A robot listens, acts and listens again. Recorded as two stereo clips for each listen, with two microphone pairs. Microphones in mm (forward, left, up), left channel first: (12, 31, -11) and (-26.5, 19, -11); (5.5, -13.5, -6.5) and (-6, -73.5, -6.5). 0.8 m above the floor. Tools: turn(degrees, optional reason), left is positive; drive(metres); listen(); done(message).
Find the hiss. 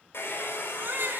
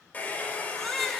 listen()
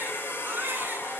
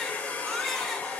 listen()
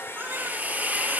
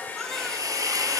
turn(degrees=-115, reason="The hiss: 115° right.")
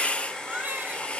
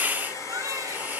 turn(degrees=-40, reason="The hiss is now 40° right.")
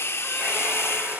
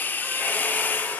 turn(degrees=15, reason="The hiss is now 15° left.")
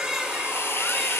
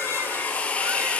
done("Found it: a hiss, straight ahead.")